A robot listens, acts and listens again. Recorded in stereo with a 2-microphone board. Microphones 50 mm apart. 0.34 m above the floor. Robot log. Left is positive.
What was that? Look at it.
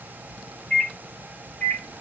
note: The microwave: about 25° left or 155° left.
cmd yaw +25
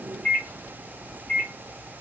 note: So it is at 130° left.
cmd yaw +130
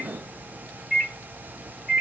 note: The microwave is now 15° right.
cmd yaw -15
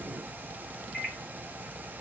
end: Found it: a microwave, straight ahead.